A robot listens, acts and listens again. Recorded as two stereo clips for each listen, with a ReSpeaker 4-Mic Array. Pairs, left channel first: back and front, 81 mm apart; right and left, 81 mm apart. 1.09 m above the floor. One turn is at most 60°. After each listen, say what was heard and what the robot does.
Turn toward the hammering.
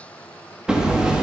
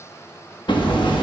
The hammering: 80° right. Turn 60° right.
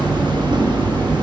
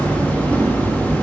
The hammering is now 20° right. Turn 20° right.
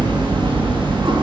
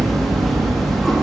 Facing the hammering.